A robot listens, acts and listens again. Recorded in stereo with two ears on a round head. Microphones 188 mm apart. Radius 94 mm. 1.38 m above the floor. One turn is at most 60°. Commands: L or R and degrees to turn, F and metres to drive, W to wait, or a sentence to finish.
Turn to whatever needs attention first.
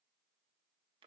W
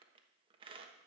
W
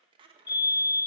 L20
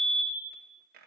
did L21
Facing the fire alarm.